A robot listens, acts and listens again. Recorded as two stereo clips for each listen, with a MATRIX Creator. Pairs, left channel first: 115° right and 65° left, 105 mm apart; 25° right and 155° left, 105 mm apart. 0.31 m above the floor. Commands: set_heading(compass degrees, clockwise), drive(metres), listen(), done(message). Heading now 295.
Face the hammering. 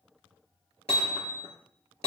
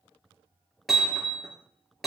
set_heading(50)
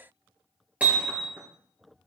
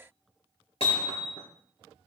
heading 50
set_heading(60)
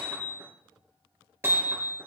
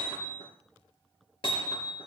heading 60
done("Found it: hammering, straight ahead, over 4 m away.")